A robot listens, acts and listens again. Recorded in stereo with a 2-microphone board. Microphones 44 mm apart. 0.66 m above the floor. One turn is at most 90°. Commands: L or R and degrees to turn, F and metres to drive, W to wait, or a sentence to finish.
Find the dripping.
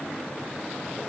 W
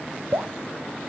R90
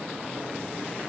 W
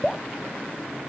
Facing the dripping, under 1 m away.